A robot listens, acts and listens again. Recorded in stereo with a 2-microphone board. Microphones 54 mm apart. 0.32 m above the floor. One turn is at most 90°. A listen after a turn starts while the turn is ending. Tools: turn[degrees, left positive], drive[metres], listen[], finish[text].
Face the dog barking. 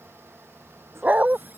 Thought: The dog barking: about 30° right or 150° right.
Action: turn[-30]
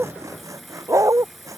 Thought: So it is at 100° right.
Action: turn[-90]
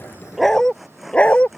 Thought: The dog barking is now 30° left.
Action: turn[30]
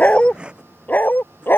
Thought: The dog barking is now 45° left.
Action: turn[45]
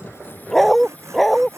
Action: finish[Found it: a dog barking, straight ahead.]